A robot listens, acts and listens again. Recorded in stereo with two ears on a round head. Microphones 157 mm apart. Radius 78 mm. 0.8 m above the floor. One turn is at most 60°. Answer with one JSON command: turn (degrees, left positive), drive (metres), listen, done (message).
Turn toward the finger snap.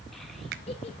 {"turn": -60}
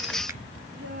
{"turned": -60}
{"listen": true}
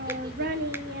{"listen": true}
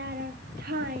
{"done": "I heard a finger snap, but can't make it out now. It was about 5° right or 55° right."}